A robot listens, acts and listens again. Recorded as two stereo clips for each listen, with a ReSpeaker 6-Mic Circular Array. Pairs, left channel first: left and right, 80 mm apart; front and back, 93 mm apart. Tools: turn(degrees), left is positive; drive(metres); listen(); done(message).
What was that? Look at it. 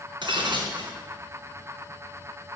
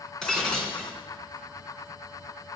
turn(degrees=-85)
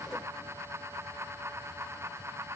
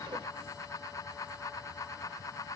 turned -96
turn(degrees=15)
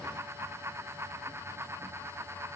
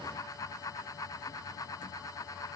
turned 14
done("Facing where the breaking glass came from. I can't hear it now.")